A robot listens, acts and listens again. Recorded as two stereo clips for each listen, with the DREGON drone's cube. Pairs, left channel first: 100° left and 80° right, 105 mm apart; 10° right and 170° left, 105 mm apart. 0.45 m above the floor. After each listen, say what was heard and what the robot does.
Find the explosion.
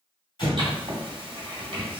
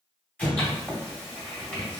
The explosion: 65° left. Turn 65° left.
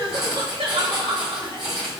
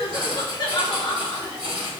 Facing where the explosion came from. I can't hear it now.